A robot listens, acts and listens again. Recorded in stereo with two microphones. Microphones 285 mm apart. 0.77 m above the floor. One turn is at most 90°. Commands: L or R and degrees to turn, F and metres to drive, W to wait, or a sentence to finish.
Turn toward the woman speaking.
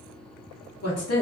L55
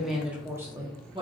R20
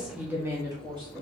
R20
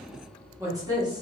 R15
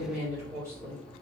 R10
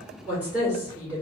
Facing the woman speaking, 2 to 4 m away.